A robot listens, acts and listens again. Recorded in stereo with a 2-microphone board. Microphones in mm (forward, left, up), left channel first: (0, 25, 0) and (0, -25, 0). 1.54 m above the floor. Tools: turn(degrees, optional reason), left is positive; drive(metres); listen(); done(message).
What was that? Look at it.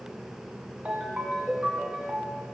turn(degrees=-20, reason="The ringtone: about 20° right or 160° right.")
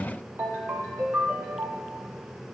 turn(degrees=-135, reason="So it is at 135° right.")
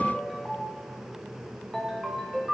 done("Facing the ringtone.")